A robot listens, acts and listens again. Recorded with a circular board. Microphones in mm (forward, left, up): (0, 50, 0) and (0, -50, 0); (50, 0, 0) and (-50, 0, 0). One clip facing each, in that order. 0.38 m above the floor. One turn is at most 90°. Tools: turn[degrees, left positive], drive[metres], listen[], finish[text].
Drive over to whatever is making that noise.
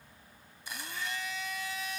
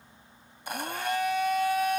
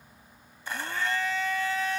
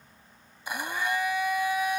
Thought: The blender: 105° right.
Action: turn[-90]
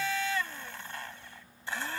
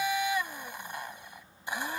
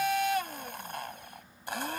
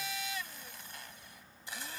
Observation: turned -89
Thought: The blender is now 15° right.
Action: turn[-15]
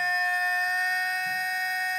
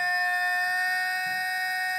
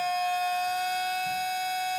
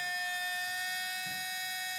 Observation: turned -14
Action: drive[1.0]
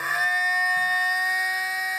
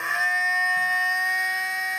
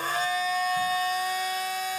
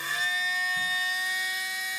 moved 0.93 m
Action: drive[1.0]
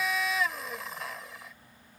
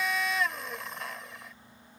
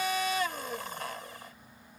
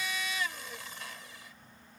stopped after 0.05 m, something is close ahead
Action: finish[Arrived at the blender, straight ahead.]